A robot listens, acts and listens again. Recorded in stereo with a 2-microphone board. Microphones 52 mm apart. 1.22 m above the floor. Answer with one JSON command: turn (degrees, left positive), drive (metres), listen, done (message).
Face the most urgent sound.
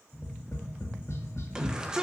{"turn": -15}
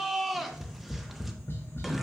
{"done": "Facing the shout, 1 to 2 m away."}